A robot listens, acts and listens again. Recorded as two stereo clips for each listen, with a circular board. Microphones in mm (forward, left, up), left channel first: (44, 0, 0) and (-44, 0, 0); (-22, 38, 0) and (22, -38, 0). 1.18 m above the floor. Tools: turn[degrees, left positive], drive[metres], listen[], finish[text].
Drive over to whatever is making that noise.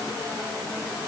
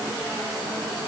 Action: listen[]
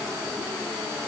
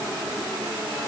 Action: listen[]
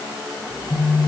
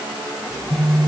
Thought: The phone buzzing: 35° left.
Action: turn[35]
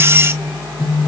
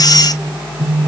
Action: drive[1.0]
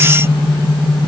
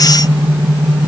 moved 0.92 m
Thought: The phone buzzing is now 10° left.
Action: turn[10]
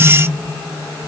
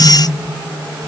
Action: listen[]
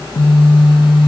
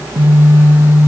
Action: drive[1.0]
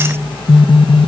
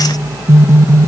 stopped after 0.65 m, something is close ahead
Action: finish[I am next to the phone buzzing.]